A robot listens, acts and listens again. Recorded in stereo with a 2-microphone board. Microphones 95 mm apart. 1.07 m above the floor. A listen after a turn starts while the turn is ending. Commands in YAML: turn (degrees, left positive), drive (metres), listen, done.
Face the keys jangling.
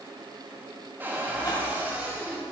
listen: true
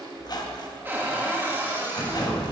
turn: 35
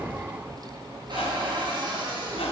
done: "Found it: keys jangling, straight ahead, 2 to 4 m away."